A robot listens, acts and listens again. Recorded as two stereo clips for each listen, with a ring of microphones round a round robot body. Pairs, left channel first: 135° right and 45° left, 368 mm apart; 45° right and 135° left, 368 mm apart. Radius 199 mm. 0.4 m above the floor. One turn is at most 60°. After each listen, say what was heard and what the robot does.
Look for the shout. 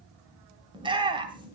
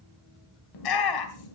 The shout: 30° right. Turn 30° right.
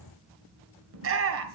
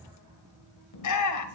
Found it: a shout, straight ahead, 2 to 4 m away.